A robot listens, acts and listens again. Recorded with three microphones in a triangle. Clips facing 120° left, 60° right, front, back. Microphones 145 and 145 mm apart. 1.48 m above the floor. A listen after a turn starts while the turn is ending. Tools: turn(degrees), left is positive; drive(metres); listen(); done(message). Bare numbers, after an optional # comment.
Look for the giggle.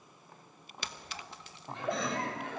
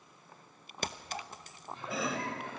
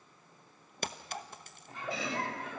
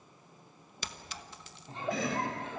# The giggle: 115° left.
turn(115)
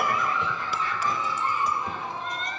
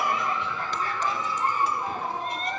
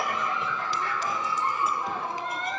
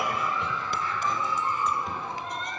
# The giggle is now 15° right.
turn(-15)
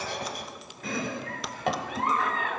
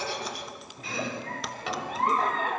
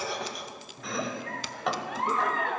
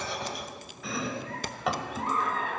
done("Found it: a giggle, straight ahead.")